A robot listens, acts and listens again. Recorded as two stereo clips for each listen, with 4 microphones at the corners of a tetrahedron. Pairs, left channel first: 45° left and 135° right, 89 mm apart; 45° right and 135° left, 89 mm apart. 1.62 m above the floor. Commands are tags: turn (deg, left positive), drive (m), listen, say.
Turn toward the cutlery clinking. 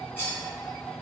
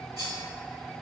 <turn deg="105"/>
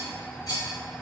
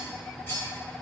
<turn deg="10"/>
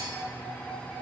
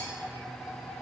<listen/>
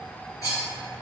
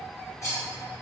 <say>Facing the cutlery clinking, 1 to 2 m away.</say>